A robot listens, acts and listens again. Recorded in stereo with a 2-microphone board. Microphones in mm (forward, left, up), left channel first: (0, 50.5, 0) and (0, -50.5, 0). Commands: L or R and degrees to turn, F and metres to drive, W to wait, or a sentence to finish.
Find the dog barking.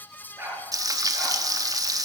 R20
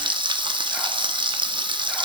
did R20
W
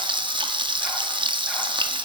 W
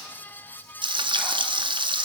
I heard a dog barking, but can't make it out now. It was about straight ahead or 140° right.